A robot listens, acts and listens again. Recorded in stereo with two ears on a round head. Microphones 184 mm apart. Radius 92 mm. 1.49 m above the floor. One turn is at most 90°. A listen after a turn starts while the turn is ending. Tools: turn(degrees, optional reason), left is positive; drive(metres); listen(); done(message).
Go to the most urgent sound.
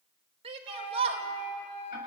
turn(degrees=-30, reason="The shout: about 30° right or 150° right.")
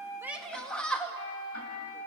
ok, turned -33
drive(metres=1.0)
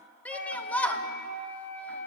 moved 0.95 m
drive(metres=1.0)
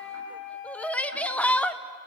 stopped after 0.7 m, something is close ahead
done("I am next to the shout.")